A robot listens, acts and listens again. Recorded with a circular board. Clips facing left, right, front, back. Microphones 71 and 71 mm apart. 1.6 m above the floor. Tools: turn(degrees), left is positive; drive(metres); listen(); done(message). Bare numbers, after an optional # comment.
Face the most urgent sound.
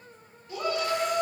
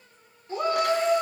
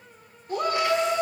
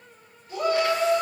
# The shout: 35° right.
turn(-35)
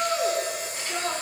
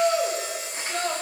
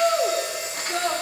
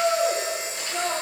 # The shout is now 15° left.
turn(15)
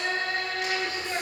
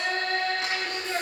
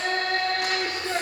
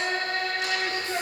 done("Found it: a shout, straight ahead.")